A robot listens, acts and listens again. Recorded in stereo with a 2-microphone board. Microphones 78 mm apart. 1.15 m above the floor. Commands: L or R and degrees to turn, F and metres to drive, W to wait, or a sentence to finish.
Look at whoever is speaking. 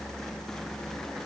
W
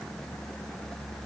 W
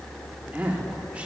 R20
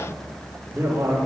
R35
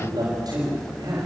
R115
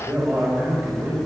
R30
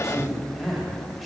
Found it: a man speaking, straight ahead.